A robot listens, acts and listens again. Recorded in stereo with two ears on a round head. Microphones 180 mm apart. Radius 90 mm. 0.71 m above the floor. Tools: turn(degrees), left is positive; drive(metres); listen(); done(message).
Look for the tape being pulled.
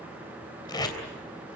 turn(degrees=20)
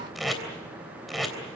done("Found it: tape being pulled, straight ahead, 2 to 4 m away.")